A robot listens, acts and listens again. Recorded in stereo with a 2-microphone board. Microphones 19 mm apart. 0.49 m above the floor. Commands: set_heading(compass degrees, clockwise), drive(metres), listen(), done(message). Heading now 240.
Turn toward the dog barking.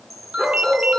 set_heading(305)
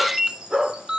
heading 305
set_heading(355)
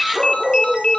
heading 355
done("Facing the dog barking.")